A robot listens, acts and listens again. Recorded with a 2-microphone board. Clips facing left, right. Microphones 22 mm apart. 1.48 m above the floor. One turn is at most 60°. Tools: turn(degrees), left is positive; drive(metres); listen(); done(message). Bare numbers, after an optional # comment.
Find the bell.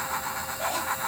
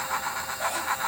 listen()
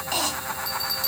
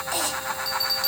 # The bell: about 20° right or 160° right.
turn(-20)
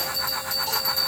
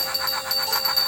# So it is at 140° right.
turn(-60)
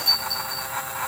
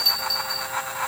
# The bell is now 85° right.
turn(-60)
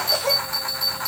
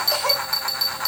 # The bell is now 50° right.
turn(-50)
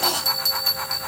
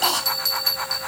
# The bell is now 10° right.
turn(-10)
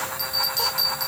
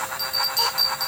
done("Facing the bell.")